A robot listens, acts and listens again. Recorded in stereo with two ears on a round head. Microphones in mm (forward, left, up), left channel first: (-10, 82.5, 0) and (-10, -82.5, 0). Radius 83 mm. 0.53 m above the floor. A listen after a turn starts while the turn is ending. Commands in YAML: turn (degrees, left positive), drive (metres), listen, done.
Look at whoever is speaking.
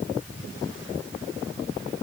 listen: true
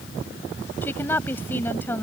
turn: 30
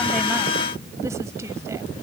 turn: -15
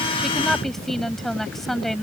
done: "Found it: a woman speaking, straight ahead."